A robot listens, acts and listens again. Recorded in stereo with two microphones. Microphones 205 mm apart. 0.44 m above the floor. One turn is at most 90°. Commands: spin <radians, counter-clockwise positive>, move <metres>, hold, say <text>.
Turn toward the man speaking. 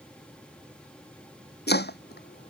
hold
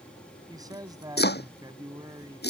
spin -0.35
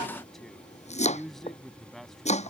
say Found it: a man speaking, straight ahead.